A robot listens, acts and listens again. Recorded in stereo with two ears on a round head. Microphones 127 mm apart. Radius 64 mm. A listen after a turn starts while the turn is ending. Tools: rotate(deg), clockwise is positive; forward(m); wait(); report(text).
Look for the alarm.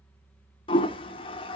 wait()
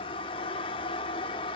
wait()
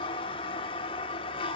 report("I can't make out an alarm, only a toilet flushing.")